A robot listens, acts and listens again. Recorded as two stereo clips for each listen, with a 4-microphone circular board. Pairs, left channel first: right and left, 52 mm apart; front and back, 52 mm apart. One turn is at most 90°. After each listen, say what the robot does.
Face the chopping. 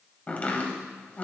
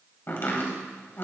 Turn 35° right.
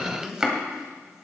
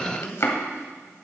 Turn 15° left.
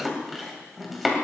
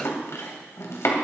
Found it: chopping, straight ahead.